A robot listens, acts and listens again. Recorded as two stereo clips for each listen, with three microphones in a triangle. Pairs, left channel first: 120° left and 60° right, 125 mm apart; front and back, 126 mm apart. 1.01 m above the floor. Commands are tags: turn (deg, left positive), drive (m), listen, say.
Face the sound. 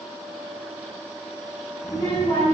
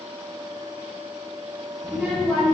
<turn deg="85"/>
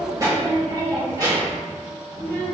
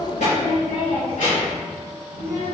<turn deg="-10"/>
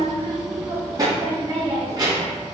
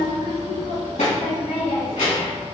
<turn deg="-10"/>
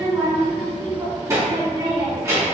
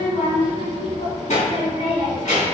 <say>Found it: a child speaking, straight ahead.</say>